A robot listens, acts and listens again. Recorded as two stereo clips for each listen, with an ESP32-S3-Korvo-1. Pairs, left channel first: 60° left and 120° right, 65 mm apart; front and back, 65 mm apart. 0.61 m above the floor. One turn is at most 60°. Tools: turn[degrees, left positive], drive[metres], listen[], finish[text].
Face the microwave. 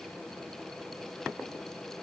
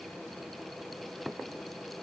Action: listen[]
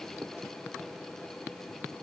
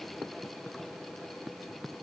Action: listen[]
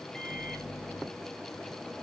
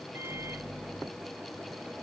Thought: The microwave: 140° left.
Action: turn[60]
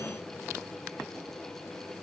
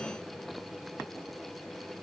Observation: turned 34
Thought: Nothing new. It was at 105° left.
Action: turn[60]
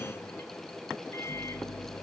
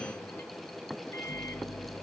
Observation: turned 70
Thought: The microwave is now 30° left.
Action: turn[30]
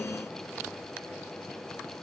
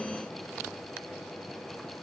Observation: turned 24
Action: listen[]
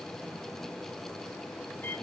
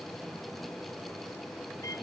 Thought: The microwave is now 10° left.
Action: turn[10]
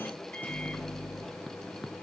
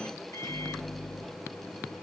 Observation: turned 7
Action: finish[Found it: a microwave, straight ahead, under 1 m away.]